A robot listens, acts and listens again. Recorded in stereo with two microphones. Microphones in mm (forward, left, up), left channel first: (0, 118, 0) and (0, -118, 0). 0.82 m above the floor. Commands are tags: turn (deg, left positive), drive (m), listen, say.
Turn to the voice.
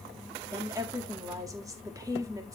<turn deg="-30"/>
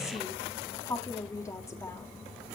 <turn deg="15"/>
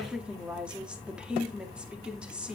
<say>Found it: a woman speaking, straight ahead, 1 to 2 m away.</say>